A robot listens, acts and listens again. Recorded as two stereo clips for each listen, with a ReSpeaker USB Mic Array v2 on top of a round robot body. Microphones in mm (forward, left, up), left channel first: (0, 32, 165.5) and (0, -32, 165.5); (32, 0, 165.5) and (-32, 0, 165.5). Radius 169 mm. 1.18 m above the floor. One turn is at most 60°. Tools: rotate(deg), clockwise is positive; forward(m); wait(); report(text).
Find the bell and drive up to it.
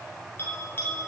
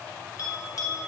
rotate(-30)
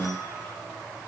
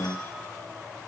wait()
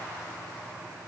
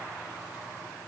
wait()
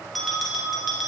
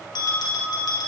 forward(1.0)
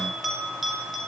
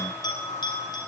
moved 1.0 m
forward(1.0)
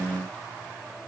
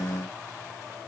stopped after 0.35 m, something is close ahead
wait()
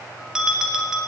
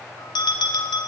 rotate(10)
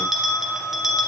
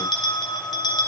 report("Arrived at the bell, straight ahead.")